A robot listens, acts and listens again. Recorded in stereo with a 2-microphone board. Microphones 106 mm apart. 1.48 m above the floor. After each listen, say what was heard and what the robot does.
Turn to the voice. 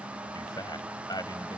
The man speaking: about 40° left or 140° left. Turn 40° left.
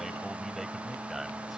Keep listening.
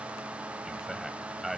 Found it: a man speaking, straight ahead.